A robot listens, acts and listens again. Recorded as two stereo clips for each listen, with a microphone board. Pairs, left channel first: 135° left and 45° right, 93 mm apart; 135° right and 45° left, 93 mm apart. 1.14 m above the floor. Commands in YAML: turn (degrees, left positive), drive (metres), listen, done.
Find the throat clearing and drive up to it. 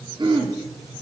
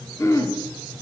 turn: -80
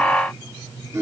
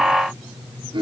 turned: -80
turn: 15
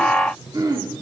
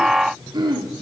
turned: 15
drive: 1.0
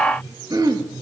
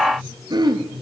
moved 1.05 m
drive: 1.0
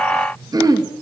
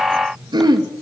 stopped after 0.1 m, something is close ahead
done: "I am next to the throat clearing."